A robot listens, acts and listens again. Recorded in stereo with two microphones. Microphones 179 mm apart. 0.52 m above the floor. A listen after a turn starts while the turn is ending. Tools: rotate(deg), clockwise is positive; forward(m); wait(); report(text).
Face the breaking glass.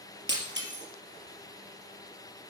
rotate(90)
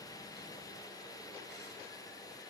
report("I heard breaking glass from this way, but can't make it out now.")